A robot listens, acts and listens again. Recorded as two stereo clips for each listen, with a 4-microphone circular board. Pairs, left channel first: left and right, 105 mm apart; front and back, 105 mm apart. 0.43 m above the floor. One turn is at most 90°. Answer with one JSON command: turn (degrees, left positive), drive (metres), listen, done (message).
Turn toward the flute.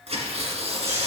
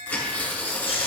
{"listen": true}
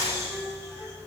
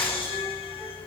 {"listen": true}
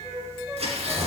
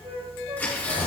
{"turn": -90}
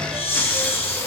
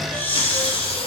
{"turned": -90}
{"turn": -80}
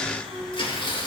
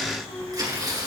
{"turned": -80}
{"turn": 35}
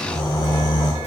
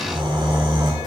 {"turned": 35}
{"listen": true}
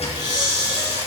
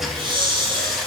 {"listen": true}
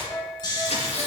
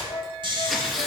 {"done": "Facing the flute, 2 to 4 m away."}